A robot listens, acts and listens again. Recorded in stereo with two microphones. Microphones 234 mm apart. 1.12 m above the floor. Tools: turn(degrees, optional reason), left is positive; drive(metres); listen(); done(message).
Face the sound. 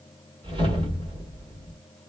turn(degrees=-20, reason="The whoosh: about 20° right or 160° right.")
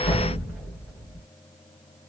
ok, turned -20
done("Facing the whoosh, 1 to 2 m away.")